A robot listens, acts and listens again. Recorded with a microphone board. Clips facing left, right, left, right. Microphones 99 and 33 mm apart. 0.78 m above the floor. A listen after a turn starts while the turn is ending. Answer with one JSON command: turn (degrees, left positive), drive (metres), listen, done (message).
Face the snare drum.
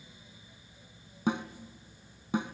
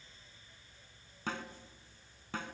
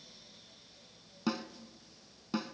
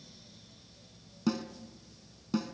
{"turn": 15}
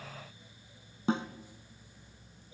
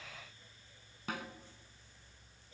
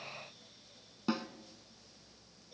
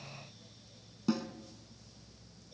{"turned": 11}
{"turn": 155}
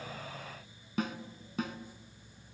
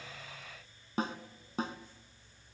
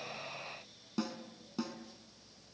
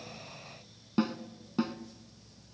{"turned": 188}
{"turn": -35}
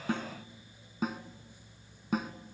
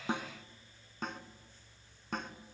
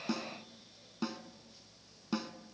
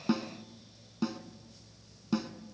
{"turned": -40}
{"done": "Facing the snare drum."}